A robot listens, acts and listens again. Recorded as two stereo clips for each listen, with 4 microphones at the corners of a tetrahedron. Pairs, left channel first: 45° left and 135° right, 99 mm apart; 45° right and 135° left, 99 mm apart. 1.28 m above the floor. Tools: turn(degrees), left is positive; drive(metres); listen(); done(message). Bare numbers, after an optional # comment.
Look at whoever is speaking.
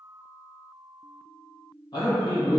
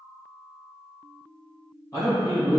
done("Found it: a man speaking, straight ahead, 1 to 2 m away.")